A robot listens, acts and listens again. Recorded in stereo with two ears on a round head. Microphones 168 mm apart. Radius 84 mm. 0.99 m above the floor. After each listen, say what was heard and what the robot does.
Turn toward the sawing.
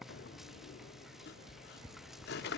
The sawing: about 60° left or 120° left. Turn 60° left.
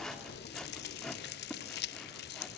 Facing the sawing, 2 to 4 m away.